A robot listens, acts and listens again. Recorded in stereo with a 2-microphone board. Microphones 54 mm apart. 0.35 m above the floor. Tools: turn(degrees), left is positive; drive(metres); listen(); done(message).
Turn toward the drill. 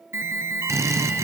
turn(degrees=-65)
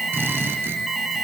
turn(degrees=-45)
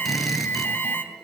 done("Facing the drill, 2 to 4 m away.")